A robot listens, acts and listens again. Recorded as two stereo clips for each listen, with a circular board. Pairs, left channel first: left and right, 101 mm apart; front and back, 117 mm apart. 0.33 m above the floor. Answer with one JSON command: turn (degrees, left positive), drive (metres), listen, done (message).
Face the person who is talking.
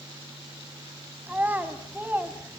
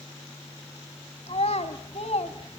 {"turn": -20}
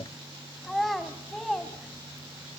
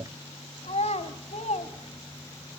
{"done": "Facing the child speaking."}